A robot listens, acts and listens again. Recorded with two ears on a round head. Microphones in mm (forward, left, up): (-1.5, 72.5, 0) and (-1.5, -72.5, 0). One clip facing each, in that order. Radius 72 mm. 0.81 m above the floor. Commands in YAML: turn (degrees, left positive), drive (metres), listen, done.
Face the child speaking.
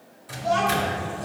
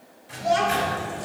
turn: -30
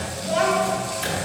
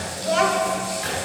turn: -100
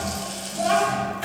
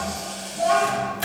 turn: 50
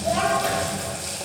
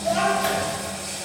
done: "Found it: a child speaking, straight ahead, 2 to 4 m away."